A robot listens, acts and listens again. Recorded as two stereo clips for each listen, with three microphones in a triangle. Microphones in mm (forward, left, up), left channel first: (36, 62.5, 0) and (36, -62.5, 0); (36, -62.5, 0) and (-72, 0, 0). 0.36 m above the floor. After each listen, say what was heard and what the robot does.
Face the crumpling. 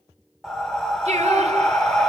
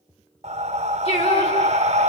Keep listening.
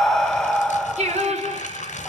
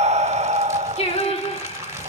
The crumpling: 85° left. Turn 85° left.
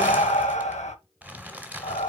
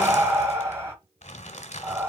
The crumpling is now 10° right. Turn 10° right.
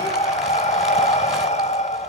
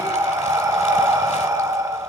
Keep listening.
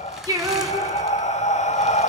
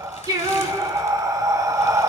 Keep listening.
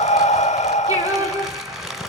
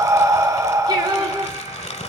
Found it: crumpling, straight ahead, 1 to 2 m away.